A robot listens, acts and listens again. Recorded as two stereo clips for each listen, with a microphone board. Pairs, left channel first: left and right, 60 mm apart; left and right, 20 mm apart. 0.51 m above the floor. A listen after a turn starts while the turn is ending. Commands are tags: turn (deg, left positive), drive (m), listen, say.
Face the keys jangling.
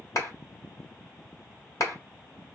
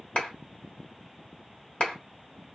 <listen/>
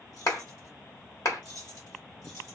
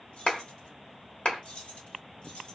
<turn deg="70"/>
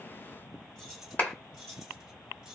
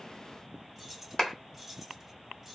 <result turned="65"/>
<say>Facing the keys jangling.</say>